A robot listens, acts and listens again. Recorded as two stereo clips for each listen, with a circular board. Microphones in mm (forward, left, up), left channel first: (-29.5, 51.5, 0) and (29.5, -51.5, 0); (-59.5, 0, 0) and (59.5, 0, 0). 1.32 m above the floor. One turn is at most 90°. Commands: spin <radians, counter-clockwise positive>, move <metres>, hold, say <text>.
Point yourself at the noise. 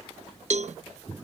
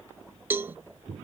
spin -1.31
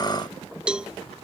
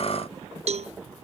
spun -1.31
spin 0.35
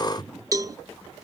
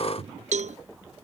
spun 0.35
say Facing the cowbell.